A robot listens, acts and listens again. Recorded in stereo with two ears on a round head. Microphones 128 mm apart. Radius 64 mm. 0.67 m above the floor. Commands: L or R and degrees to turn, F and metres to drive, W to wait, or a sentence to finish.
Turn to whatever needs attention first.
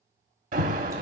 R65
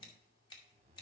W
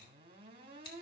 W
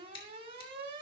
R40
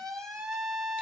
Facing the alarm.